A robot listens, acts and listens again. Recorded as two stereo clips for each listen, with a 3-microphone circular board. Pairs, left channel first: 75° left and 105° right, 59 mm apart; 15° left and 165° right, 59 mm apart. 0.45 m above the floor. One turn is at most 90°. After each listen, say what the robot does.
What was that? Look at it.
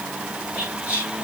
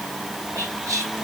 Turn 90° right.
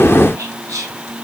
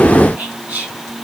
Turn 90° right.
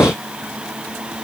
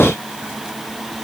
Turn 15° right.
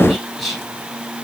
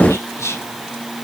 Turn 15° right.
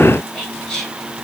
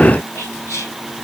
Found it: whispering, straight ahead, 2 to 4 m away.